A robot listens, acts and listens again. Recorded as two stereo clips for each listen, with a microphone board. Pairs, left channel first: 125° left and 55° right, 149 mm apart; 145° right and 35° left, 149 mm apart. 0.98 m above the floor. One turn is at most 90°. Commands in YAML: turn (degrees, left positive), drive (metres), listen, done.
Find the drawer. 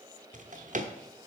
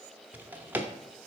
turn: -40
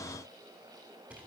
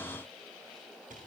listen: true
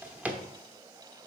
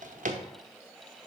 turn: 25
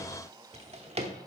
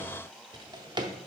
turn: -20
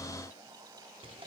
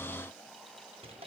listen: true
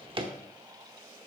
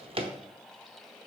turn: -10
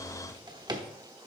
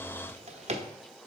done: "Found it: a drawer, straight ahead, under 1 m away."